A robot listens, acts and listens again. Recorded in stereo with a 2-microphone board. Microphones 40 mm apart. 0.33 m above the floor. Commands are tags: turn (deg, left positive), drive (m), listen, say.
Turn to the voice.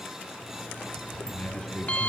<turn deg="25"/>
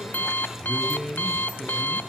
<say>Facing the man speaking.</say>